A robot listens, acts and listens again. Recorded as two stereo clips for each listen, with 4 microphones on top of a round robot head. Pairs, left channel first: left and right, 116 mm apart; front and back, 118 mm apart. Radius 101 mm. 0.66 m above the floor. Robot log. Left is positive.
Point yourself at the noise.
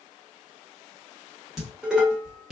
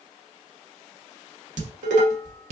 note: The dishes clattering: straight behind.
cmd yaw +180
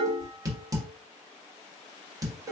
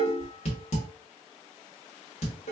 note: The dishes clattering is now 30° right.
cmd yaw -30
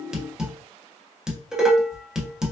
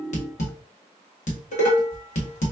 end: Facing the dishes clattering, 1 to 2 m away.